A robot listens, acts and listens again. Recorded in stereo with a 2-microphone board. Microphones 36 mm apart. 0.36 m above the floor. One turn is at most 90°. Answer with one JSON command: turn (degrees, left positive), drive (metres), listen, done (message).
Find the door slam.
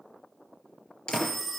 {"turn": 25}
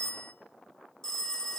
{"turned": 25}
{"listen": true}
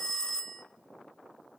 {"done": "I heard a door slam, but can't make it out now. It was about straight ahead or 130° left."}